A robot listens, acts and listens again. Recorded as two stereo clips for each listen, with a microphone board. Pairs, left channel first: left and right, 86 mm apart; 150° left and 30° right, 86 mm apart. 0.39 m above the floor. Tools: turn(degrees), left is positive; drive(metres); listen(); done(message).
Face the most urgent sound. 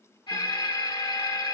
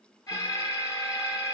turn(degrees=105)
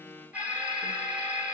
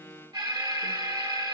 turn(degrees=-15)
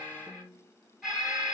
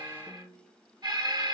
done("Found it: an alarm, straight ahead.")